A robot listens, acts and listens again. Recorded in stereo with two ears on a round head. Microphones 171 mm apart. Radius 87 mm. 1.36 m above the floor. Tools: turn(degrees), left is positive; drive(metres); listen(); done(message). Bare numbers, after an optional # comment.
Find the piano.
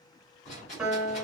turn(-30)
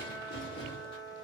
# So it is at 25° left.
turn(25)
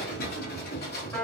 # The piano is now 15° left.
turn(15)
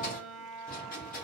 done("Found it: a piano, straight ahead, 1 to 2 m away.")